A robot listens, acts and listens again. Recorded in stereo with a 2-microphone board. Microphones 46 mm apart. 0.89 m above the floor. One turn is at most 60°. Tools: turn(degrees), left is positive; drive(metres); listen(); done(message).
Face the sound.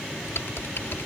turn(degrees=60)
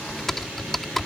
done("Found it: typing on a keyboard, straight ahead.")